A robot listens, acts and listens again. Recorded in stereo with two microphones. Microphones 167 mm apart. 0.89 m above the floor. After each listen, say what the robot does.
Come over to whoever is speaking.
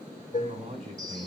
Turn 45° right.
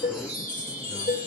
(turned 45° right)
Keep listening.
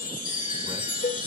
Keep listening.
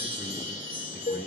I heard a man speaking, but can't make it out now. It was about straight ahead or 90° right. I did not reach it.